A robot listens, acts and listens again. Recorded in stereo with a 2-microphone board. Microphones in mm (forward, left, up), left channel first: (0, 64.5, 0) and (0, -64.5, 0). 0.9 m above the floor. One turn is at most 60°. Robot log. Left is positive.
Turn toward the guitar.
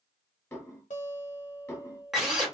note: The guitar: about 70° left or 110° left.
cmd yaw +60
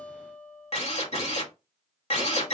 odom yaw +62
note: So it is at 15° left.
cmd yaw +15
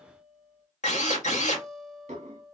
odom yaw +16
end: Found it: a guitar, straight ahead, under 1 m away.